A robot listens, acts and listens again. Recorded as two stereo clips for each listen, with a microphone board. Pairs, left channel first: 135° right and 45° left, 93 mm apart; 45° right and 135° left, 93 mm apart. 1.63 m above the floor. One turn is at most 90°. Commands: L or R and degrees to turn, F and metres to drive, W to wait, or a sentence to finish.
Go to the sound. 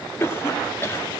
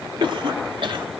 L90
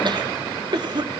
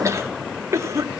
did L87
L80
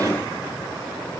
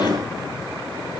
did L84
W
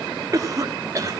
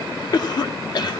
F1.0
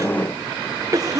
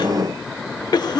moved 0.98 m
F1.0
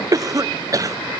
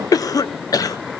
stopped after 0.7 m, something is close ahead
Arrived at the cough, straight ahead.